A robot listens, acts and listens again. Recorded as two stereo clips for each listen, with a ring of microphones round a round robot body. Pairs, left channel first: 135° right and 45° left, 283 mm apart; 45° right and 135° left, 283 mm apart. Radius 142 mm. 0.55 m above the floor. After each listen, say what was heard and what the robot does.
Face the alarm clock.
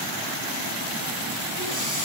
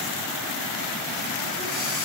Keep listening.
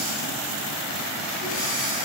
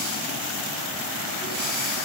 Keep listening.
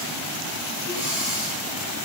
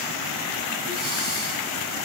I can't make out an alarm clock.